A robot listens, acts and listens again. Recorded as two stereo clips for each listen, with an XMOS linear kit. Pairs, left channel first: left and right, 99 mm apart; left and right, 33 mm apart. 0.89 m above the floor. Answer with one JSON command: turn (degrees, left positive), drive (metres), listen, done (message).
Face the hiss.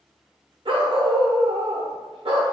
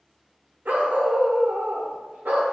{"listen": true}
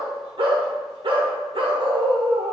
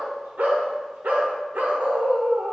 {"listen": true}
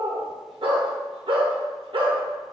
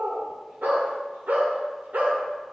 {"done": "I can't make out a hiss to turn to."}